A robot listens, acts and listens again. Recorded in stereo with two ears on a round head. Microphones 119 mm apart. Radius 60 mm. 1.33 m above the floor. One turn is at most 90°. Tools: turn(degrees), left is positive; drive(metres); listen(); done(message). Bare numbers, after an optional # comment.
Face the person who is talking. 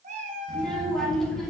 turn(30)
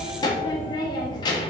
# So it is at 145° left.
turn(90)
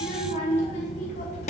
# The child speaking is now 50° left.
turn(50)
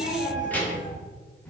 # The child speaking is now 10° left.
turn(10)
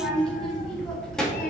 done("Found it: a child speaking, straight ahead, 1 to 2 m away.")